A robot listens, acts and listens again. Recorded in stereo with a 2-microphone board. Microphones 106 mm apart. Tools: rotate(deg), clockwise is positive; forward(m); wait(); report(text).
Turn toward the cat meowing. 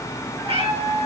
rotate(60)
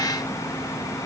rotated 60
wait()
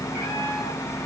wait()
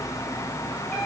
report("I heard a cat meowing, but can't make it out now. It was about straight ahead or 60° right.")